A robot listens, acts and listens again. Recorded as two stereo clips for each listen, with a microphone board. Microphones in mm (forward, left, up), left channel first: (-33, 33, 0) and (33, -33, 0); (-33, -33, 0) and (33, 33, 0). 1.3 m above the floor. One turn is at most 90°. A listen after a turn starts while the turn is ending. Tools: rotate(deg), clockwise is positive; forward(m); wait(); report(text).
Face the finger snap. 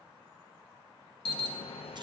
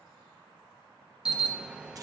wait()
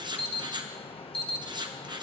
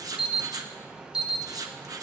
wait()
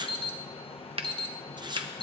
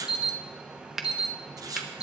rotate(40)
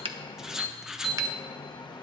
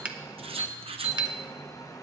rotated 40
wait()
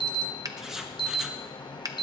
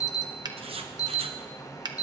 report("Found it: a finger snap, straight ahead, under 1 m away.")